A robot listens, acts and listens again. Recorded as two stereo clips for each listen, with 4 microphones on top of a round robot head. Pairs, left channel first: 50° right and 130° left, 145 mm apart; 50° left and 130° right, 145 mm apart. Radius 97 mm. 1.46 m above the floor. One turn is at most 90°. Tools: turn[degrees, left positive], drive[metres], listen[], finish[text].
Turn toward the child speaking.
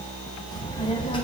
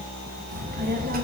Thought: The child speaking: 105° right.
Action: turn[-90]
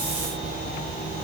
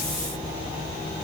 Action: finish[Found it: a child speaking, straight ahead, 2 to 4 m away.]